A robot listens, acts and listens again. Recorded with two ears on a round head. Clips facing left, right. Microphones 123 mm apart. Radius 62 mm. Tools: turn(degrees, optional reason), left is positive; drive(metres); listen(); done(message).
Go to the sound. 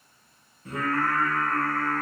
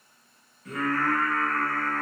turn(degrees=25, reason="The singing: about 25° left or 155° left.")
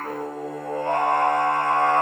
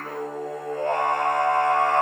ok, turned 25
turn(degrees=130, reason="So it is at 130° left.")
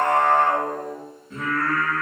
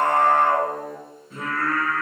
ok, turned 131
drive(metres=1.0)
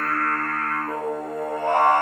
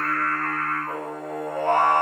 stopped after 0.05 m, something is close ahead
done("Something is in my way. I am facing the singing but have not reached it.")